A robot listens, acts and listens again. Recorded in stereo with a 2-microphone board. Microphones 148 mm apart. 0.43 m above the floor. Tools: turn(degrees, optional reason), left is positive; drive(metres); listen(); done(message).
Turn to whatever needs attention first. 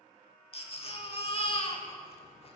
turn(degrees=40, reason="The baby crying: about 40° left or 140° left.")
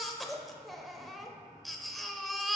done("Found it: a baby crying, straight ahead.")